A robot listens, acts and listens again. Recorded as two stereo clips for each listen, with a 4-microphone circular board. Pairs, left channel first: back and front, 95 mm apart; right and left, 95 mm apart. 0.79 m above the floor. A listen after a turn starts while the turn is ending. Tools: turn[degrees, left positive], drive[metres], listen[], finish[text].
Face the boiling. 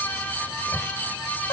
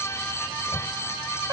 Action: listen[]
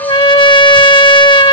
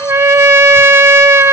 Action: listen[]
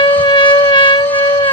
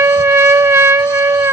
Action: finish[I can't make out boiling, only a trumpet.]